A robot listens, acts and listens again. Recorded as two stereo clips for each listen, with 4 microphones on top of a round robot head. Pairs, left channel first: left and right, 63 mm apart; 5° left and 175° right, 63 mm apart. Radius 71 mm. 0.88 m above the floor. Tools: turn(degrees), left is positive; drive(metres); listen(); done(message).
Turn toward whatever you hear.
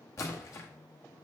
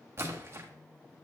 turn(degrees=135)
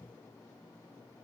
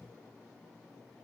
done("Facing where the splash came from. I can't hear it now.")